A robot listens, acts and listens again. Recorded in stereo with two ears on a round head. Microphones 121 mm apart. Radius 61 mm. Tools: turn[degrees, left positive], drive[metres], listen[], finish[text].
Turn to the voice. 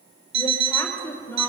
Thought: The woman speaking: about 15° left or 165° left.
Action: turn[15]
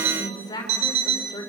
Thought: So it is at 150° left.
Action: turn[150]
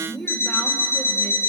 Thought: The woman speaking is now 10° left.
Action: turn[10]
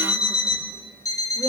Action: listen[]
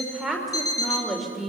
Action: finish[Facing the woman speaking.]